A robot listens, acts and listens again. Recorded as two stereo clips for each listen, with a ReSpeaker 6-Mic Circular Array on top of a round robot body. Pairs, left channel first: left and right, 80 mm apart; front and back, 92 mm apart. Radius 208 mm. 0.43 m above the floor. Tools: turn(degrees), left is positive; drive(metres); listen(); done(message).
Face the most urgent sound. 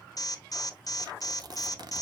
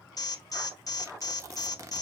turn(degrees=50)
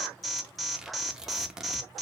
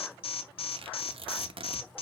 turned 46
done("Found it: an alarm, straight ahead, 1 to 2 m away.")